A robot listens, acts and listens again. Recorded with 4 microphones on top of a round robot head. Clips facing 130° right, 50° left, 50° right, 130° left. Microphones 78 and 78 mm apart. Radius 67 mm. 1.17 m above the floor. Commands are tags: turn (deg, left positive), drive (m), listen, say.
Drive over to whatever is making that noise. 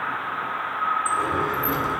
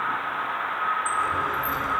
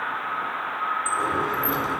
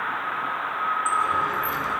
<turn deg="-85"/>
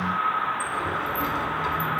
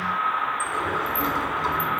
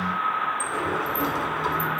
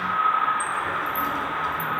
<turn deg="-10"/>
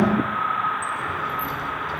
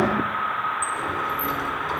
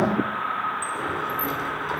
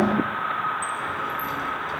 <drive m="1.0"/>
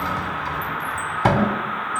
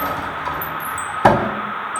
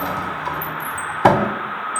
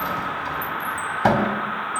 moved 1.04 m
<drive m="1.0"/>
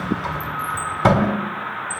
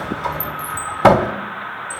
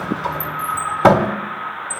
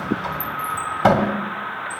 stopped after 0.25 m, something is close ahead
<say>Arrived at the sliding door, straight ahead.</say>